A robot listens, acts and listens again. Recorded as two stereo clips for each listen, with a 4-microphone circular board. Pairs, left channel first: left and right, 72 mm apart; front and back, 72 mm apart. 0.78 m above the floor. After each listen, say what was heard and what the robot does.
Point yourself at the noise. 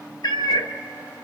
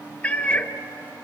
The cat meowing: 75° left. Turn 75° left.
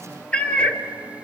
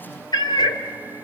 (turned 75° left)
The cat meowing is now 15° left. Turn 15° left.
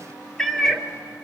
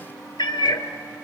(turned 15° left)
Found it: a cat meowing, straight ahead, under 1 m away.